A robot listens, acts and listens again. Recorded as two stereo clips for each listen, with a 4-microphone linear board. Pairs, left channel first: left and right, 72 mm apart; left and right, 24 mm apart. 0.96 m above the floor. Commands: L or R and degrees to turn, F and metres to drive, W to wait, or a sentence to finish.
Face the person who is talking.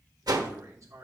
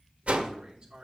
R45
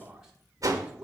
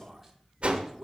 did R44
Facing the man speaking, 2 to 4 m away.